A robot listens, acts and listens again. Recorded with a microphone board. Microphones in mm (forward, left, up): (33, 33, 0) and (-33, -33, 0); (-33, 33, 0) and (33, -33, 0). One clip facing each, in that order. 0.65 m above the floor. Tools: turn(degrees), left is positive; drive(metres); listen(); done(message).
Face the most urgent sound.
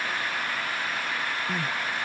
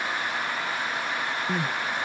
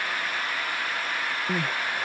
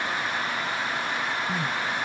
turn(degrees=160)
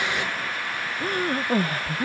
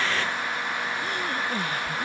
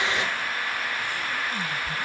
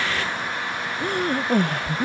turn(degrees=-10)
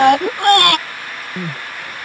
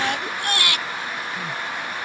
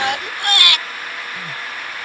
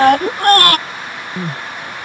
done("Found it: crying, straight ahead.")